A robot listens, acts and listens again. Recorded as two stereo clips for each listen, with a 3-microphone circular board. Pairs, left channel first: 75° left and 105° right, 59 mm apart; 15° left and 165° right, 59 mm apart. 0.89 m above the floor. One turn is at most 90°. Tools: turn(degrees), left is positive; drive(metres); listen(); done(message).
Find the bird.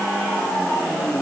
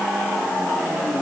listen()
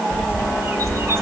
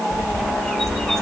turn(degrees=-65)
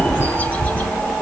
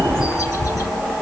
turn(degrees=15)
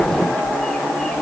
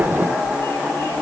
done("Found it: a bird, straight ahead.")